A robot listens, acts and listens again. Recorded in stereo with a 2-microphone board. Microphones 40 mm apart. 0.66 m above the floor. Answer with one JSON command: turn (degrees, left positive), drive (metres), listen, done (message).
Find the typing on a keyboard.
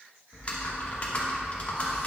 {"turn": 35}
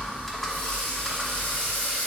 {"done": "Found it: typing on a keyboard, straight ahead, 1 to 2 m away."}